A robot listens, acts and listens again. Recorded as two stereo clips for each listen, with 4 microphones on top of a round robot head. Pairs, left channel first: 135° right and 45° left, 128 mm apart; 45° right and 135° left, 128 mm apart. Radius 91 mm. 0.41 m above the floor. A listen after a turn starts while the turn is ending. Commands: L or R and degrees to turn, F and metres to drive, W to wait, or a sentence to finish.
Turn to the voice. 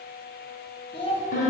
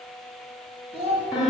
L175
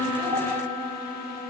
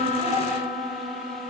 W
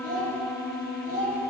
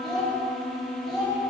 L40
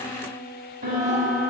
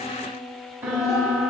W
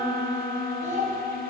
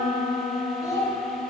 L20
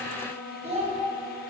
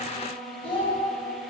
Facing the child speaking.